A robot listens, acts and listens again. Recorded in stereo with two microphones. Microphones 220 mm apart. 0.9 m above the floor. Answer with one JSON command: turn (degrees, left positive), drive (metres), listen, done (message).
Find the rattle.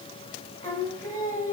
{"listen": true}
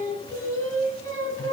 {"listen": true}
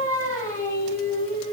{"done": "I can't make out a rattle to turn to."}